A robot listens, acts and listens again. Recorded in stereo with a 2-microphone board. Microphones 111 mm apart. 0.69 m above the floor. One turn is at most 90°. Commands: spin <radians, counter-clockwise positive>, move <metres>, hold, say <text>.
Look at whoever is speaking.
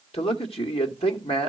spin 1.05
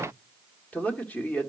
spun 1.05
spin 0.26
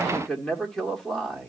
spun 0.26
say Found it: a man speaking, straight ahead.